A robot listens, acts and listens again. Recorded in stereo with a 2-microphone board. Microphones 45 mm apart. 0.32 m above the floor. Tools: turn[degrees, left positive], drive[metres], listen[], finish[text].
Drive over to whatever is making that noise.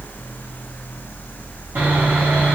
Thought: The sawing: about 55° right or 125° right.
Action: turn[-55]
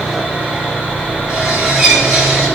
Thought: So it is at 10° right.
Action: turn[-10]
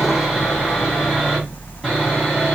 Action: drive[1.0]
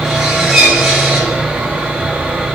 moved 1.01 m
Thought: The sawing is now 15° right.
Action: turn[-15]
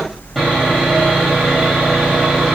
Action: drive[1.0]
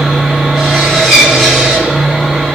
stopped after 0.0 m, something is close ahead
Action: finish[I am next to the sawing.]